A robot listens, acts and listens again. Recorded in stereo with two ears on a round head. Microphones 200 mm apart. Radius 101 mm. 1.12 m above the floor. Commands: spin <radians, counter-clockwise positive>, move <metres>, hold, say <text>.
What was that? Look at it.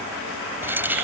spin -0.52
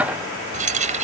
spin -2.53
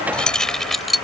say Facing the keys jangling.